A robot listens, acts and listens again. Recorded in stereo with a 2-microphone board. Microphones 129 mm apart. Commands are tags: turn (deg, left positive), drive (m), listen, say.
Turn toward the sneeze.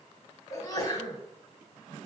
<turn deg="30"/>
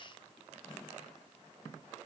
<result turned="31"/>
<listen/>
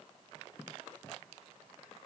<say>I heard a sneeze, but can't make it out now. It was about 5° right or 120° left.</say>